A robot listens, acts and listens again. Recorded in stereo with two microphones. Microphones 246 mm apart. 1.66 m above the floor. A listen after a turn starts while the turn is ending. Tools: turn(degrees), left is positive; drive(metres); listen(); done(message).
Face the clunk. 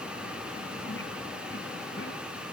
listen()
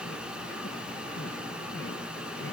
listen()
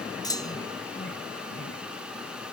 turn(degrees=15)
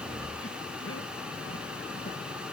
listen()
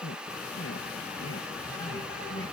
done("I heard a clunk, but can't make it out now. It was about straight ahead or 150° left.")